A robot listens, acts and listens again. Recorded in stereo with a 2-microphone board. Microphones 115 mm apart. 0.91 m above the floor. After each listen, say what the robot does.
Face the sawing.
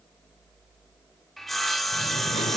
Turn 30° left.
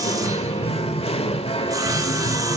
Keep listening.
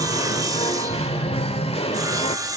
Turn 30° right.
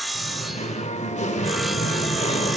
Found it: sawing, straight ahead, 1 to 2 m away.